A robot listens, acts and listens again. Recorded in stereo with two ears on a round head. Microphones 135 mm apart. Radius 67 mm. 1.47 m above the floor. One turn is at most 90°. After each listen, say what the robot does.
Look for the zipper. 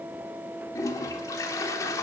Keep listening.
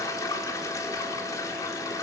Keep listening.
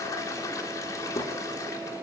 I can't make out a zipper, only a toilet flushing.